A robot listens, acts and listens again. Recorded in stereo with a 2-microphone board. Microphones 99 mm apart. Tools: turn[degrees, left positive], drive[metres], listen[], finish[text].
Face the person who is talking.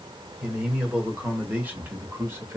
Thought: The man speaking: about 30° right or 150° right.
Action: turn[-30]
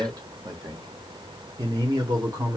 Thought: The man speaking: about 35° right or 145° right.
Action: turn[-35]
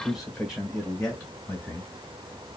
Action: finish[Facing the man speaking, 1 to 2 m away.]